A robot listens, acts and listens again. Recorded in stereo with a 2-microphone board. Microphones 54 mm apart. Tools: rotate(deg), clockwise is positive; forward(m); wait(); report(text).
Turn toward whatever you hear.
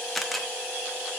rotate(-30)
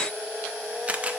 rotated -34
rotate(30)
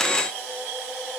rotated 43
rotate(-15)
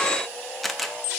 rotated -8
report("Found it: a camera shutter, straight ahead, under 1 m away.")